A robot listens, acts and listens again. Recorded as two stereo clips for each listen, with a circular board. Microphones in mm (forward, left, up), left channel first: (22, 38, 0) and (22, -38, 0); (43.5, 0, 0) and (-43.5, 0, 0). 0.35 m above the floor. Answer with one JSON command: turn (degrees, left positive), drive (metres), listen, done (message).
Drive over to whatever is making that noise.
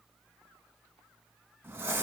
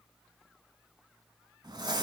{"turn": -150}
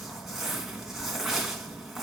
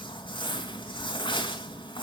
{"drive": 1.0}
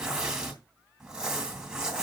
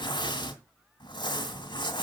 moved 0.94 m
{"turn": -10}
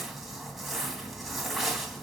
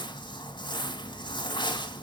{"drive": 1.0}
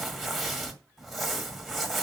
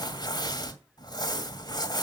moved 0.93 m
{"drive": 1.0}
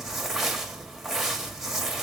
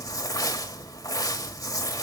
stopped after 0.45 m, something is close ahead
{"turn": -10}
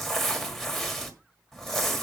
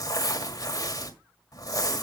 {"done": "I am next to the crumpling."}